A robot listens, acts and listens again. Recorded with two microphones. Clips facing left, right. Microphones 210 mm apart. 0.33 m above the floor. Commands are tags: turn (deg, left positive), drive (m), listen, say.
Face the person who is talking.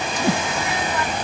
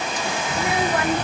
<turn deg="-60"/>
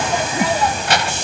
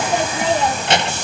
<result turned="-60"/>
<turn deg="-30"/>
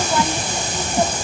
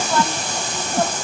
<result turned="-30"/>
<listen/>
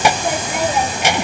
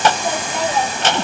<turn deg="15"/>
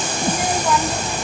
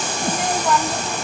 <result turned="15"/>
<say>Found it: a child speaking, straight ahead.</say>